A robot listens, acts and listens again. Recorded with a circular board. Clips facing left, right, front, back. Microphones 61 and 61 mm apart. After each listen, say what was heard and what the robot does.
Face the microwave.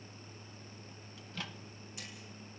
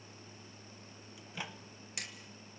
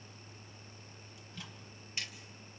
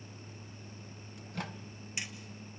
The microwave: 160° right. Turn 160° right.
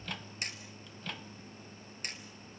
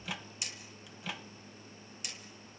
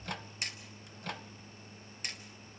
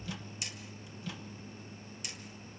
The microwave is now 10° right. Turn 10° right.
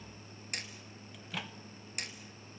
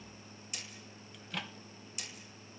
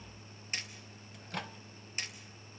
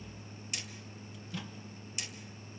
Facing the microwave, 1 to 2 m away.